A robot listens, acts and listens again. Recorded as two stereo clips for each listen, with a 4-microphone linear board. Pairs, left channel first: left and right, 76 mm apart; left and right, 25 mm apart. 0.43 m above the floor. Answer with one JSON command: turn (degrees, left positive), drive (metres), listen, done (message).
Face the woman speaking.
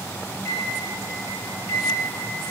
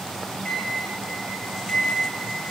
{"listen": true}
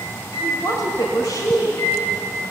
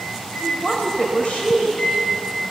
{"turn": 60}
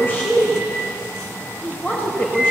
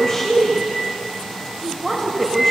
{"turn": 30}
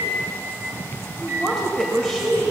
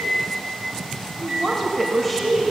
{"done": "Facing the woman speaking."}